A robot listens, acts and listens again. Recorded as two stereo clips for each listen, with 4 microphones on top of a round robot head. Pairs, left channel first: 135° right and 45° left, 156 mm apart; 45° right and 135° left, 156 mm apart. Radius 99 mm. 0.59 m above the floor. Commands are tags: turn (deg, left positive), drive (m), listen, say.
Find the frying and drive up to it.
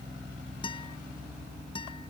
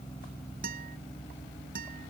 <listen/>
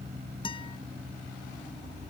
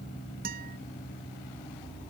<listen/>
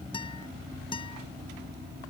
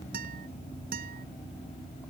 <say>I can't make out frying to turn to.</say>